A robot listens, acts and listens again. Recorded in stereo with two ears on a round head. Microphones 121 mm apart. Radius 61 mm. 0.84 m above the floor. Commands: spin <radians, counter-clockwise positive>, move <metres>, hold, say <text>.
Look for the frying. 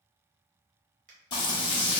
spin 0.70
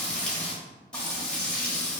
spin 0.17
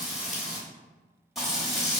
say Facing the frying, under 1 m away.